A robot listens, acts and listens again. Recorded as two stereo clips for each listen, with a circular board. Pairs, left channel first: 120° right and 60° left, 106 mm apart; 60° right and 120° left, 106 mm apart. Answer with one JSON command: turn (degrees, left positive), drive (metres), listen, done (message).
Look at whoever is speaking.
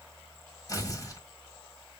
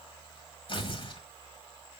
{"listen": true}
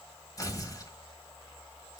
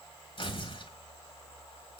{"listen": true}
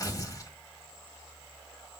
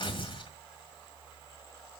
{"done": "I can't make out anyone speaking, only tearing paper."}